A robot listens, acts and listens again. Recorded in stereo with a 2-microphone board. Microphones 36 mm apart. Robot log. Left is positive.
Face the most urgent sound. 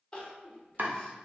note: The crying: about 20° left or 160° left.
cmd yaw +20
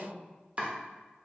note: So it is at 135° left.
cmd yaw +135
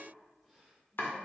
cmd idle
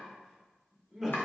note: The crying is now 10° left.
cmd yaw +10
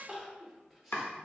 end: Facing the crying.